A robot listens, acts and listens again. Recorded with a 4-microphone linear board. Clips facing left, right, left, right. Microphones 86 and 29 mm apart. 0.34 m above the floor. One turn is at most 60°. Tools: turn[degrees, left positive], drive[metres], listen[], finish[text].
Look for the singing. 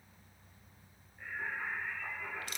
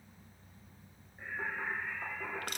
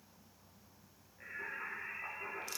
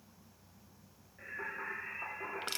Thought: The singing: about 30° right or 150° right.
Action: turn[-30]
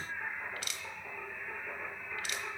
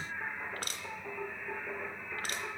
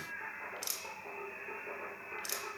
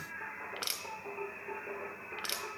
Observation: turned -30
Action: finish[Found it: singing, straight ahead, 2 to 4 m away.]